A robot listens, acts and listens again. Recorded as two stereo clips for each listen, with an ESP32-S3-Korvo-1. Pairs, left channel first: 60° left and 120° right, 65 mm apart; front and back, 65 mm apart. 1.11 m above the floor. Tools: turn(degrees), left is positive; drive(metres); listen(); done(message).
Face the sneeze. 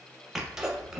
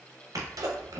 turn(degrees=160)
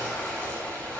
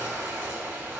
done("I heard a sneeze from this way, but can't make it out now.")